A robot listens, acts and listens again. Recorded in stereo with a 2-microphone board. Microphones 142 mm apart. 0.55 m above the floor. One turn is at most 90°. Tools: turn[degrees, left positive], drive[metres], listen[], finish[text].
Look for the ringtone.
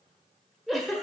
Action: listen[]
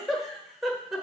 Action: listen[]
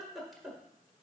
Action: finish[I can't make out a ringtone to turn to.]